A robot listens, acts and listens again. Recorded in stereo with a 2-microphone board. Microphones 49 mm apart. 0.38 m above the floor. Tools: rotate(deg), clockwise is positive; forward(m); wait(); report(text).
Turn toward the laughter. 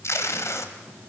wait()
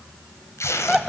rotate(-30)
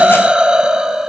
rotate(30)
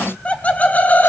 rotate(-30)
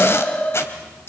rotate(-30)
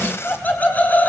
rotate(-35)
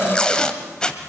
wait()
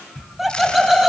report("Facing the laughter.")